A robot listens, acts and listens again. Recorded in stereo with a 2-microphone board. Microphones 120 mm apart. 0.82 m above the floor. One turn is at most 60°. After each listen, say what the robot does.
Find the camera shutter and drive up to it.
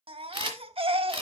Turn 45° right.
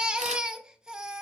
Keep listening.
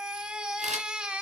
Keep listening.
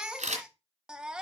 Turn 60° right.
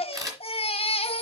Turn 30° right.
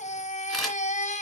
Drive 1.0 m forward.
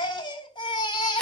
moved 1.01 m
Keep listening.
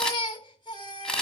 Drive 1.0 m forward.
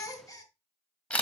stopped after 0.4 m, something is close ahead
Turn 10° left.
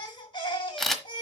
Arrived at the camera shutter, straight ahead.